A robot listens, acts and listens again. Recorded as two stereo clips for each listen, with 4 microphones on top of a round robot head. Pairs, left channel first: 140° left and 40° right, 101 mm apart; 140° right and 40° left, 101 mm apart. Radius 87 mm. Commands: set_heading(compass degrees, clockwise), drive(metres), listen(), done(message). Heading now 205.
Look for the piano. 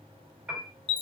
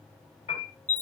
set_heading(330)
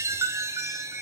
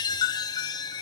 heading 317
set_heading(327)
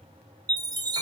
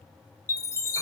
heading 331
listen()
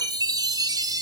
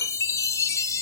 done("Facing where the piano came from. I can't hear it now.")